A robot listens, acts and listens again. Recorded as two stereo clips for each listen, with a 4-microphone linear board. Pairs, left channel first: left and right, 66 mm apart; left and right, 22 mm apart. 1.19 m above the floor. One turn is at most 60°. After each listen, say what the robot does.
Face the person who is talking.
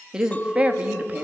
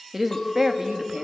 Turn 20° right.
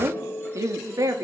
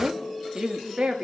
Turn 60° right.
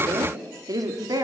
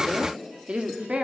Turn 55° right.
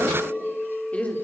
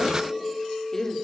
Turn 20° left.
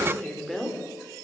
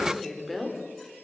Found it: a woman speaking, straight ahead.